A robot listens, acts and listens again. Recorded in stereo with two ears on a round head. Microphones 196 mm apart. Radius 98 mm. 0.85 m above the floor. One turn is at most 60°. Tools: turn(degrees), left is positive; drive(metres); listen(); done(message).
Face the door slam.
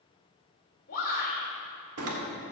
turn(degrees=-60)
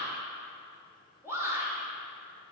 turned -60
turn(degrees=-30)
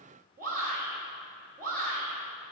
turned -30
done("I heard a door slam from this way, but can't make it out now.")